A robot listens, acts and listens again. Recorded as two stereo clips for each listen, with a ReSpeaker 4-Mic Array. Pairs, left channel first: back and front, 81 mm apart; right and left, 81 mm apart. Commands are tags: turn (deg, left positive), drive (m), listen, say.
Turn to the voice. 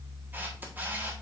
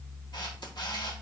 <listen/>
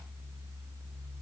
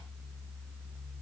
<listen/>
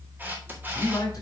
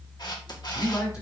<turn deg="-140"/>
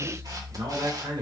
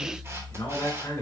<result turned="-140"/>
<turn deg="-40"/>
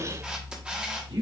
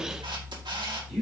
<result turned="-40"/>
<say>Found it: a man speaking, straight ahead, 2 to 4 m away.</say>